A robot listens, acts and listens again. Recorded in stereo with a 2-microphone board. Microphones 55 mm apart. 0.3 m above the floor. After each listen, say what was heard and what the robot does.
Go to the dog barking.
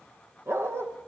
The dog barking: about 55° right or 125° right. Turn 55° right.
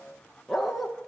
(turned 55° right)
Drive 1.0 m forward.
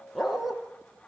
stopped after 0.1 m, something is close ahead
Blocked. The dog barking is further on, straight ahead.